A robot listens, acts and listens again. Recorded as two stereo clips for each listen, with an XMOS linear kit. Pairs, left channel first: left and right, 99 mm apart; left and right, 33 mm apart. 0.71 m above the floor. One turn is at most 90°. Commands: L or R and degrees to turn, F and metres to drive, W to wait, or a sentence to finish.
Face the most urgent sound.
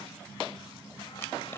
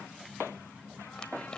W
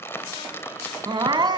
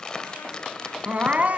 R50
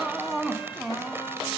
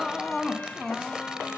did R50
Found it: crying, straight ahead.